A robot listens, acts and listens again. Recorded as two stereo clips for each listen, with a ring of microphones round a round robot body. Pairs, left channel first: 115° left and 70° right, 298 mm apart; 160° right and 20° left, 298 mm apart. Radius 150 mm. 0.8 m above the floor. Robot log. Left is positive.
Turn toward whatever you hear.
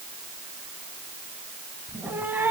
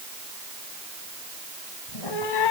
note: The cat meowing: 150° right.
cmd yaw -150
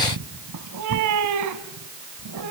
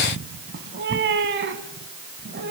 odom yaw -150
note: The cat meowing is now 35° right.
cmd yaw -35
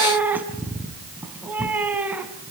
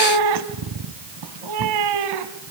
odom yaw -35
note: The cat meowing is now 15° left.
cmd yaw +15
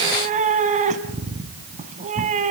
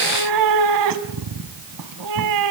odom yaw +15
end: Found it: a cat meowing, straight ahead.